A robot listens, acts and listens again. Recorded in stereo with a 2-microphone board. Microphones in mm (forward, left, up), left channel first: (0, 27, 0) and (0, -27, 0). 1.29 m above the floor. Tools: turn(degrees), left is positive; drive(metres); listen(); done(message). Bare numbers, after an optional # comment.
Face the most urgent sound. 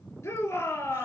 # The shout: about 65° left or 115° left.
turn(65)
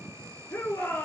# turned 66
# So it is at 50° left.
turn(50)
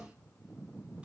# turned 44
listen()
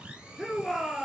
done("Facing the shout.")